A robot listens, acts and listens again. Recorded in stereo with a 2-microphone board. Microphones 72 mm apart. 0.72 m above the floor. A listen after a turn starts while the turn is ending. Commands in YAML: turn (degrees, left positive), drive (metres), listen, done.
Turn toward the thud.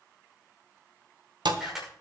turn: -90
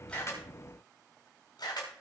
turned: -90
done: "Facing where the thud came from. I can't hear it now."